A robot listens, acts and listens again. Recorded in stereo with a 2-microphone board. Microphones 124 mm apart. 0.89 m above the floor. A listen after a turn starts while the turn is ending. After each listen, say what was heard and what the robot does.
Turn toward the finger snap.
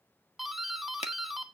The finger snap: about 65° left or 115° left. Turn 65° left.
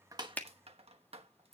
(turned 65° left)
Found it: a finger snap, straight ahead, 1 to 2 m away.